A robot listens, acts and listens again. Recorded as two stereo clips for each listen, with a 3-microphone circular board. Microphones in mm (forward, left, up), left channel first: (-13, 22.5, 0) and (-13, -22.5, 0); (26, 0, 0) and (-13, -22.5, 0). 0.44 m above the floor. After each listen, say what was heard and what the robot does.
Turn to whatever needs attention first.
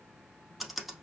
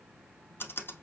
Keep listening.
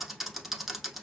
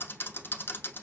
Keep listening.
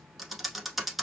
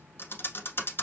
I can't make out anything urgent, only typing on a keyboard.